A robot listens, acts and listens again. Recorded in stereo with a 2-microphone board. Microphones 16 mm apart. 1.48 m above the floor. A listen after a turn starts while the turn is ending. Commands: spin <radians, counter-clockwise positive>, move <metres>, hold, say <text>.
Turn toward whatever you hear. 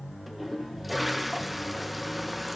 spin -0.52
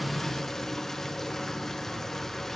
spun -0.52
spin 0.35
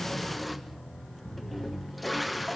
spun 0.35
say Facing the toilet flushing.